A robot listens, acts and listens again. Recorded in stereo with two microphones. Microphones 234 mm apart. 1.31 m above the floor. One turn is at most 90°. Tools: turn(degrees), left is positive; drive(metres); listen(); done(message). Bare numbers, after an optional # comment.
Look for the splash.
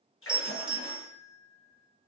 # The splash: about 65° left or 115° left.
turn(65)
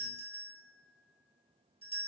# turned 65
listen()
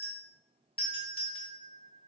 done("I heard a splash, but can't make it out now. It was about straight ahead or 50° left.")